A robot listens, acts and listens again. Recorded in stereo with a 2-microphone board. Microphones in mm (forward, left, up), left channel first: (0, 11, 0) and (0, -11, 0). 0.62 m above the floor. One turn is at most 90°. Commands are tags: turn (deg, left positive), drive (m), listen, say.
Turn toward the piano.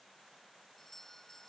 <listen/>
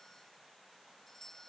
<listen/>
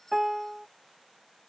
<turn deg="-25"/>
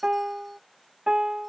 <turn deg="-90"/>
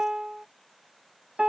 <turn deg="-50"/>
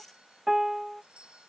<turn deg="-15"/>
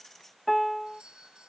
<say>Found it: a piano, straight ahead.</say>